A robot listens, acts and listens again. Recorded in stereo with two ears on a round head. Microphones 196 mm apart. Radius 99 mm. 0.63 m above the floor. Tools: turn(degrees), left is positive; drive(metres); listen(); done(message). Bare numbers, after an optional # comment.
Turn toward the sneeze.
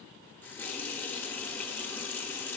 listen()
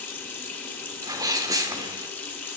# The sneeze: about 15° right or 165° right.
turn(-15)
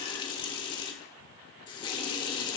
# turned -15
listen()
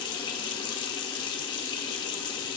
done("I heard a sneeze, but can't make it out now. It was about straight ahead or 150° right.")